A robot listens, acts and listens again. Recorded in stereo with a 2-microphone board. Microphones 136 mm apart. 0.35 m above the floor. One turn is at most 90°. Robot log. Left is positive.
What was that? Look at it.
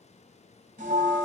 note: The bell: about 70° right or 110° right.
cmd yaw -70
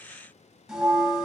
end: Facing the bell, 1 to 2 m away.